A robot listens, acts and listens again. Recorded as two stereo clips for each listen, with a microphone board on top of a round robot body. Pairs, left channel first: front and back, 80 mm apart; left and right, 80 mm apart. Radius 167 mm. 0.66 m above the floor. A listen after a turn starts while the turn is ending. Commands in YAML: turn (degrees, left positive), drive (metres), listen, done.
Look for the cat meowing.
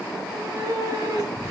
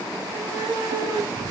turn: -140
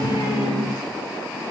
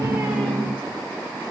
listen: true
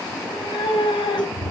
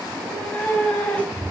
turn: 15
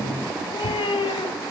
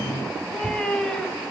done: "Facing the cat meowing, 2 to 4 m away."